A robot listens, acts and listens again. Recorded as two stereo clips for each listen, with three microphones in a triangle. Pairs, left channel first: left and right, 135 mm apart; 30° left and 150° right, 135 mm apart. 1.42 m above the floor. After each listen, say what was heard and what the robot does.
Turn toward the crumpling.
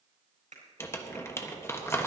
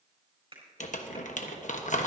The crumpling: 20° left. Turn 20° left.
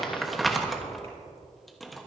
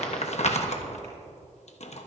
Found it: crumpling, straight ahead.